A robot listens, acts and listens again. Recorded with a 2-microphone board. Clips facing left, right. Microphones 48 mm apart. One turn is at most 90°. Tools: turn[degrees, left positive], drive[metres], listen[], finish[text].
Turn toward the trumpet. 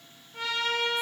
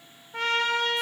Thought: The trumpet: about 60° right or 120° right.
Action: turn[-60]
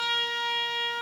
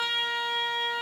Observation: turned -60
Thought: So it is at 10° right.
Action: turn[-10]
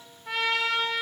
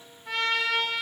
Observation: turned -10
Action: finish[Facing the trumpet, under 1 m away.]